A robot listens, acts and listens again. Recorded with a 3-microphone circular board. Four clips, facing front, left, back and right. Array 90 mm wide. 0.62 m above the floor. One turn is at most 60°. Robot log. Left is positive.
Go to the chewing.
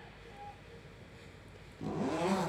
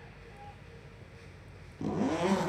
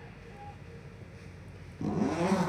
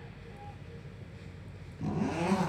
cmd idle
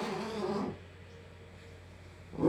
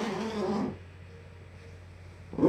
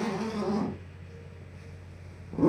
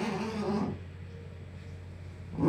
cmd idle
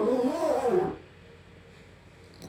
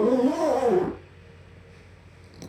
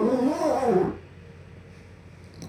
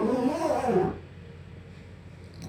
end: I can't make out chewing, only a zipper.